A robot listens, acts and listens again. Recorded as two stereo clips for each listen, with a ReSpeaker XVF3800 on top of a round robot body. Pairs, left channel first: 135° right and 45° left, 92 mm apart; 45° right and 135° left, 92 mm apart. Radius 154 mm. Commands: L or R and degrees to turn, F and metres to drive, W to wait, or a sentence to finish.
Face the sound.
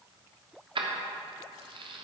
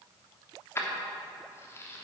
L20
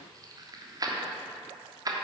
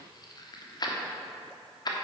Facing the keys jangling.